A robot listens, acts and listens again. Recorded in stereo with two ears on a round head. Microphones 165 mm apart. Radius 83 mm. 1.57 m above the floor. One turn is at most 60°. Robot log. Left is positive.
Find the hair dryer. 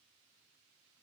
cmd idle
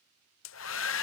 cmd yaw +60
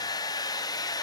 note: So it is at 20° left.
cmd yaw +20
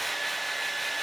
end: Facing the hair dryer.